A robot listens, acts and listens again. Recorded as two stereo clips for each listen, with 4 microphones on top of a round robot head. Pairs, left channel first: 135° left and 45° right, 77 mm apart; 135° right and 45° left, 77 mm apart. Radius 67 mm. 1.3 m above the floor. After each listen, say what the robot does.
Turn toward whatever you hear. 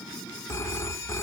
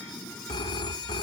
Turn 165° right.
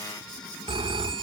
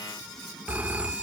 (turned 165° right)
Turn 25° right.
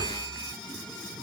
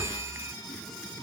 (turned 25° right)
Turn 10° right.
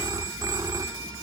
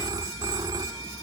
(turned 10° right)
Facing the phone ringing.